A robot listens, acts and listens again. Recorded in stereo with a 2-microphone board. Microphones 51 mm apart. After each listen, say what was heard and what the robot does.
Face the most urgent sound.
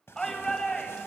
Turn 30° left.
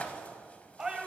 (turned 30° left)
So it is at 15° right. Turn 15° right.
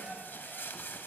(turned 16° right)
Facing the shout.